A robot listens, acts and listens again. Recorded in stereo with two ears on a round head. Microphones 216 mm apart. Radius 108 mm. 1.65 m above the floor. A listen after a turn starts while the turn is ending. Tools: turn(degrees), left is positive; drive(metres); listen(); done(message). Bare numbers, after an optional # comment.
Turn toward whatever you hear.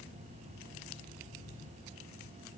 listen()
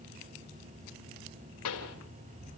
# The pop: about 70° left or 110° left.
turn(70)
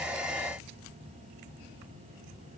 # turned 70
listen()
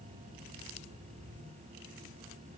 done("I heard a pop, but can't make it out now. It was about straight ahead or 40° left.")